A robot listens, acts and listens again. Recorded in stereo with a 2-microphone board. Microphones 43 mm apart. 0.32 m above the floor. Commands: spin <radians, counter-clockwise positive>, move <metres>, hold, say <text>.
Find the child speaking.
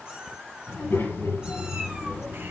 spin 1.57
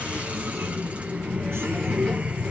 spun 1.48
spin 0.26
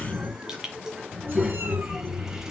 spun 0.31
say Found it: a child speaking, straight ahead.